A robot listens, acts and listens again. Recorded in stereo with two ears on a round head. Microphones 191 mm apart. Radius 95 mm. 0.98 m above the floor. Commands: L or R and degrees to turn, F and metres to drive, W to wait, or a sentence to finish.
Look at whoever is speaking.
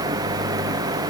W
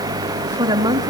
R20
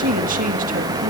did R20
R135
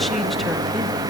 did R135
W
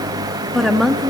Found it: a woman speaking, straight ahead.